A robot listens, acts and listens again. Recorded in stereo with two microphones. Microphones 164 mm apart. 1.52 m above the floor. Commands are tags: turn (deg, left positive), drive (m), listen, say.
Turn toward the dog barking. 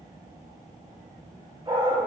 <turn deg="-30"/>
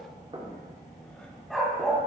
<say>Facing the dog barking, 2 to 4 m away.</say>